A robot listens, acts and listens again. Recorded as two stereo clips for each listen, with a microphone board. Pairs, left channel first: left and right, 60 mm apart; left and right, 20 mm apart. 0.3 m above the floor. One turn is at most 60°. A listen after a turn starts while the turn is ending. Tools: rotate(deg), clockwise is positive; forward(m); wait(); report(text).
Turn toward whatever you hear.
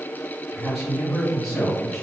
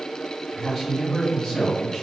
rotate(-30)
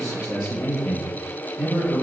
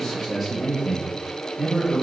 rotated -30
rotate(-30)
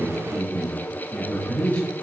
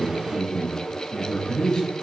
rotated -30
rotate(-30)
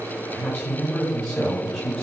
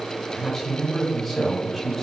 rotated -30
rotate(-30)
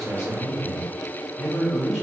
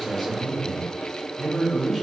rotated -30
rotate(10)
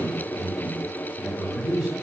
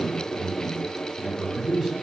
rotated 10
report("Facing the man speaking, 1 to 2 m away.")